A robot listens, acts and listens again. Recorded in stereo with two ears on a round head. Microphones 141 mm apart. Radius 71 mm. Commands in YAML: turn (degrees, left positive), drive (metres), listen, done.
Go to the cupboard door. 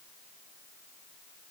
listen: true
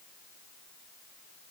listen: true
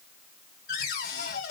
turn: 65
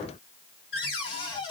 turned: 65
turn: 35
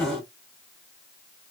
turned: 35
drive: 1.0
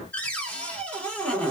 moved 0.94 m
turn: 10
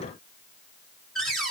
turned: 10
drive: 1.0
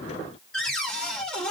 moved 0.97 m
drive: 1.0
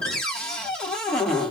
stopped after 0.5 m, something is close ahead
turn: 10
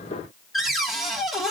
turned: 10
done: "Arrived at the cupboard door, straight ahead."